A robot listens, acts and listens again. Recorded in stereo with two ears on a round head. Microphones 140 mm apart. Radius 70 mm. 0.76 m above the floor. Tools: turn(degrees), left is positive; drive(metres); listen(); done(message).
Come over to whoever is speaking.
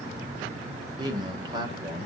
turn(degrees=-30)
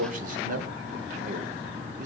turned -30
turn(degrees=-120)
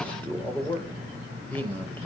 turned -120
turn(degrees=10)
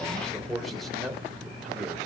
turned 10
drive(metres=1.0)
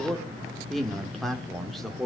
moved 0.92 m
drive(metres=1.0)
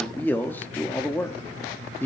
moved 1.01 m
turn(degrees=15)
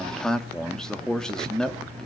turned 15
drive(metres=1.0)
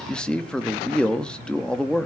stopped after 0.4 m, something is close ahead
turn(degrees=10)
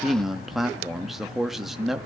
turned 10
done("I am next to the man speaking.")